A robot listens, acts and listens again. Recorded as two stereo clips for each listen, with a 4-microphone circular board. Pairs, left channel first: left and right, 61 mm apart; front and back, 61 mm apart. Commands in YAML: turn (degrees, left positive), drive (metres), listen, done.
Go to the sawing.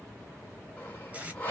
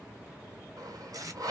turn: 150
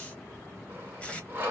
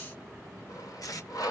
turn: -30
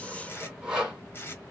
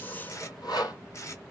turn: -15
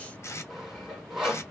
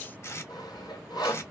drive: 1.0
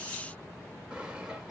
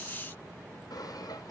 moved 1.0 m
listen: true
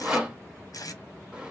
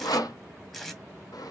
turn: -15
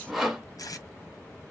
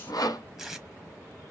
drive: 1.0
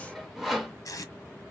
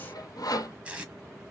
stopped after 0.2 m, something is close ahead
done: "Arrived at the sawing, straight ahead."